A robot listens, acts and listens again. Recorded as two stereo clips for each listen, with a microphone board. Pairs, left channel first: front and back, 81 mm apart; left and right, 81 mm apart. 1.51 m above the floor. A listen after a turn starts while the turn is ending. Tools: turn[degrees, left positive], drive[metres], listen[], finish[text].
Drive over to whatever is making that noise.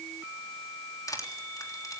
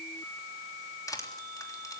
Thought: The crushing: 45° left.
Action: turn[45]
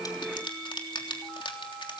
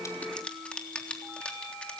Thought: The crushing is now 15° left.
Action: turn[15]
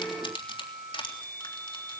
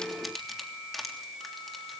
Action: drive[1.0]
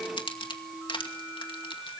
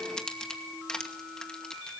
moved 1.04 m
Thought: The crushing is now 10° left.
Action: turn[10]
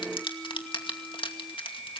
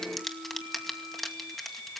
Action: drive[1.0]
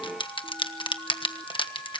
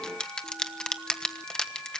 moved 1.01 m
Thought: The crushing is now 10° left.
Action: turn[10]
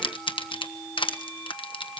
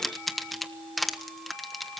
Action: drive[1.0]
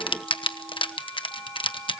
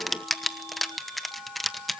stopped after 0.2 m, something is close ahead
Action: finish[I am next to the crushing.]